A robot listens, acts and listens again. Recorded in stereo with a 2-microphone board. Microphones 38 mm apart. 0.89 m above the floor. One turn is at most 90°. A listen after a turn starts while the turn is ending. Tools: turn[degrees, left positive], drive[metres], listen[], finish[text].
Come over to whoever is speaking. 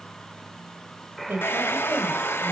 Thought: The woman speaking: about 75° right or 105° right.
Action: turn[-75]
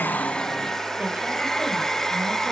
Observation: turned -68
Action: listen[]
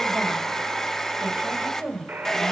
Thought: So it is at 35° right.
Action: turn[-35]
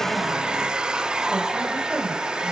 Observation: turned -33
Action: drive[1.0]
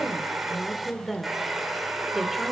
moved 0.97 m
Action: drive[1.0]
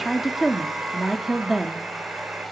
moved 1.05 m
Action: drive[1.0]
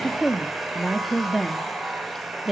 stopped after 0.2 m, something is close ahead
Action: finish[I am next to the woman speaking.]